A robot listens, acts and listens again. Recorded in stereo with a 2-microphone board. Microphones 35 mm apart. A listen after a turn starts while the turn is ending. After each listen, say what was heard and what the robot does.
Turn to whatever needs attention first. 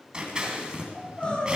The crying: about 30° left or 150° left. Turn 30° left.
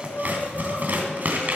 So it is at 120° left. Turn 120° left.
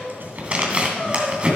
The crying is now 30° left. Turn 30° left.
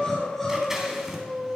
The crying is now 10° left. Turn 10° left.
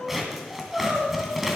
Found it: crying, straight ahead.